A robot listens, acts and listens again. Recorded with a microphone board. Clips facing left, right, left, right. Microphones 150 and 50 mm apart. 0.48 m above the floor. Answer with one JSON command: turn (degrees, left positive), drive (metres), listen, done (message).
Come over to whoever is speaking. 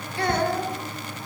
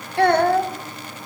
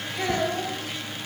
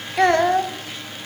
{"turn": -65}
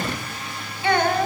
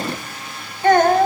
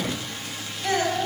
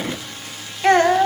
{"turn": -50}
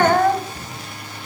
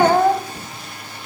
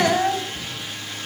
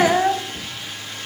{"turn": -10}
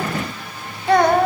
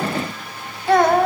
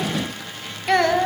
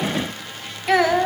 {"drive": 1.0}
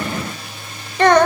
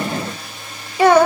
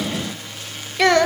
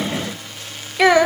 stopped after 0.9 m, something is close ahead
{"turn": -10}
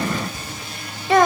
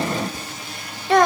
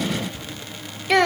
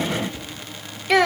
{"done": "I am next to the child speaking."}